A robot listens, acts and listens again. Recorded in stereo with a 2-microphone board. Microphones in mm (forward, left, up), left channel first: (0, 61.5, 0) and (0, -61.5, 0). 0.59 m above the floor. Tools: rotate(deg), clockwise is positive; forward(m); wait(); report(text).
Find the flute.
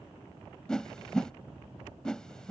wait()
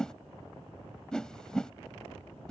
wait()
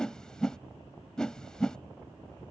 report("I can't make out a flute to turn to.")